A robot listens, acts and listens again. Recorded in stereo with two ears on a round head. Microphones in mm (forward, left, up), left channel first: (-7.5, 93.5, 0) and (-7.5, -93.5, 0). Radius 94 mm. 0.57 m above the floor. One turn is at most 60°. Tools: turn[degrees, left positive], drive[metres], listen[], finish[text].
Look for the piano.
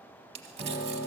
Thought: The piano: about 30° right or 150° right.
Action: turn[-30]
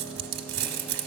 Action: listen[]
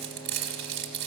Action: listen[]
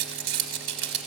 Action: finish[I heard a piano, but can't make it out now. It was about straight ahead or 120° right.]